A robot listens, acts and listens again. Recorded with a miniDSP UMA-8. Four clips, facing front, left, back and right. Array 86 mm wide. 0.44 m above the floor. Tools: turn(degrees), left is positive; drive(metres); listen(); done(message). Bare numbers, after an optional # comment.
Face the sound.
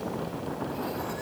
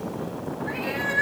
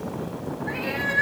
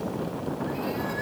# The cat meowing: 145° left.
turn(145)
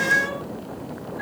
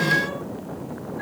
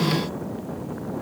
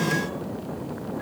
listen()
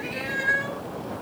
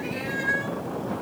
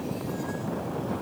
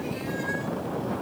# The cat meowing is now 30° left.
turn(30)
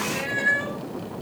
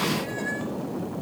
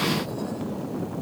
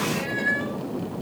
# The cat meowing is now 20° right.
turn(-20)
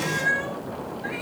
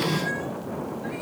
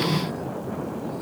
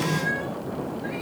done("Found it: a cat meowing, straight ahead.")